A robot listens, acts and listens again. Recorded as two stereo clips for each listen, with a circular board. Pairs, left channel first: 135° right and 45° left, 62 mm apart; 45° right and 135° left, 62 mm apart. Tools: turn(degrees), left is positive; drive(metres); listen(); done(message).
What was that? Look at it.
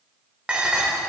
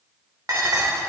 turn(degrees=115)
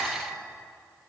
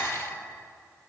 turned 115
turn(degrees=-40)
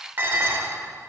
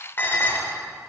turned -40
done("Found it: dishes clattering, straight ahead, 1 to 2 m away.")